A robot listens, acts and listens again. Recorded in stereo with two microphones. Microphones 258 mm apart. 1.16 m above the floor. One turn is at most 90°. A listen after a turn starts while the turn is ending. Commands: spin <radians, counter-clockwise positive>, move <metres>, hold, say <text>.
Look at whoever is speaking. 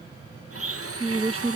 spin -0.44
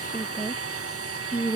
say Found it: a woman speaking, straight ahead.